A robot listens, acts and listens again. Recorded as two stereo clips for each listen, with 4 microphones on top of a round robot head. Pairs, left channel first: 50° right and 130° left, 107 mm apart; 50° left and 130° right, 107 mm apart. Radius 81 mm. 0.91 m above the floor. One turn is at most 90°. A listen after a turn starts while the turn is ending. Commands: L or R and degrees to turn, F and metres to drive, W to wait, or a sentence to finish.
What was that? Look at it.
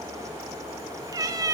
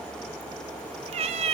R90
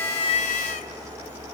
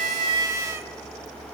R65
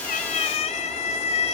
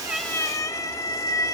R15
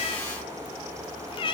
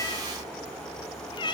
Found it: a cat meowing, straight ahead.